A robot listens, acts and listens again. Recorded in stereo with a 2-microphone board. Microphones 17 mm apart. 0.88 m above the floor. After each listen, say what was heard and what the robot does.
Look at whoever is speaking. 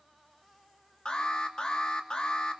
Keep listening.
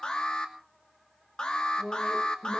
The woman speaking: about 40° left or 140° left. Turn 40° left.
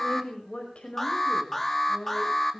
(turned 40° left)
So it is at 95° left. Turn 95° left.
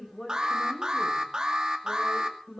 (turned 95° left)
The woman speaking is now 30° left. Turn 30° left.
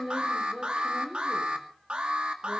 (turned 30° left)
The woman speaking is now 10° right. Turn 10° right.
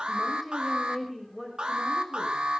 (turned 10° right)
Found it: a woman speaking, straight ahead, over 4 m away.